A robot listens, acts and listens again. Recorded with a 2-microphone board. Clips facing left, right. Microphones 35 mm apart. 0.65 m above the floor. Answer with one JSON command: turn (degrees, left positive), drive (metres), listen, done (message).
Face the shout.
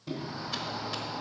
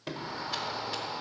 {"turn": -55}
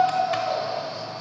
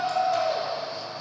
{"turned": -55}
{"done": "Found it: a shout, straight ahead, 1 to 2 m away."}